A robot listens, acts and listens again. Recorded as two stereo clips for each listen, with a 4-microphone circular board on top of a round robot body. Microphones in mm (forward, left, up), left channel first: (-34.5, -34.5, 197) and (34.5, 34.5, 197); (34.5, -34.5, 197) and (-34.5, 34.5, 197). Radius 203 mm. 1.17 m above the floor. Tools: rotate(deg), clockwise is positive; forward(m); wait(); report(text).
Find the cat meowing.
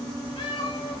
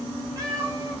rotate(165)
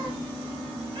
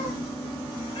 wait()
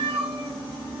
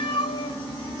report("Facing the cat meowing, 2 to 4 m away.")